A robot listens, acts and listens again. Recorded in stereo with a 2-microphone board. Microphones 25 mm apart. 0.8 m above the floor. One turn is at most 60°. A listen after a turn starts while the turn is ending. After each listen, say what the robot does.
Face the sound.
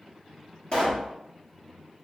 Turn 50° left.
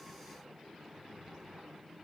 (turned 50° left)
Keep listening.
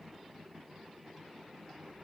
I heard a pop, but can't make it out now. It was about straight ahead or 80° left.